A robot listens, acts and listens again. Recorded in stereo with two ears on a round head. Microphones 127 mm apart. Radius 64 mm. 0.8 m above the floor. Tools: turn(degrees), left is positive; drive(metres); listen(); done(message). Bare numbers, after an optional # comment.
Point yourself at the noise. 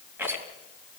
turn(-30)
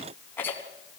# So it is at 15° left.
turn(15)
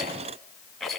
done("Facing the rattle.")